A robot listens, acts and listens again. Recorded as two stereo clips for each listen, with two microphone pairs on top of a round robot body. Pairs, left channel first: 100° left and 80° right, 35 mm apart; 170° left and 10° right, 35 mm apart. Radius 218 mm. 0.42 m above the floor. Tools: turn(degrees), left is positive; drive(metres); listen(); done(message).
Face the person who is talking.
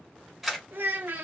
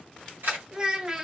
turn(degrees=-85)
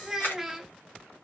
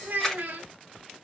done("Facing the child speaking, under 1 m away.")